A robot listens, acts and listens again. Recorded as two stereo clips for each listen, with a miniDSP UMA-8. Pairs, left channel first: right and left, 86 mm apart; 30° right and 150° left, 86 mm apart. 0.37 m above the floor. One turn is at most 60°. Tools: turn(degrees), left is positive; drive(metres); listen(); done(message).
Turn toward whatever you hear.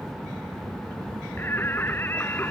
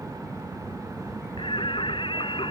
turn(degrees=-25)
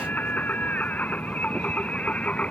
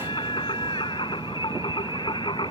turn(degrees=-15)
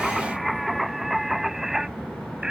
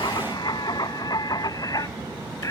turn(degrees=10)
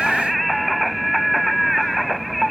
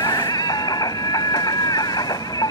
done("Found it: singing, straight ahead.")